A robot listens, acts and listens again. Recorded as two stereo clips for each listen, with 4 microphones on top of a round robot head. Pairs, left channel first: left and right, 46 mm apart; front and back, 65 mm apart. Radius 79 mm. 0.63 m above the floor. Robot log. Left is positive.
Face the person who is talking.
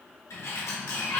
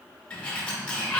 cmd idle
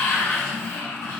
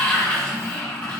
cmd idle
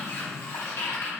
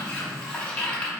end: I can't make out anyone speaking, only a sliding door.